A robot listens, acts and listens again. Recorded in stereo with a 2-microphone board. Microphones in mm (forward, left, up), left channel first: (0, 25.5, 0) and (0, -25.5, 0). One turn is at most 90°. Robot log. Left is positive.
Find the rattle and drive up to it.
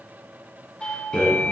note: The rattle: about 50° left or 130° left.
cmd yaw +50
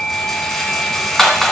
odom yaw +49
note: So it is at 10° left.
cmd yaw +10
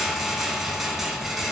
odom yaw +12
cmd fwd 1.0
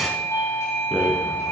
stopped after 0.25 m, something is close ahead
end: Something is in my way. I am facing the rattle but have not reached it.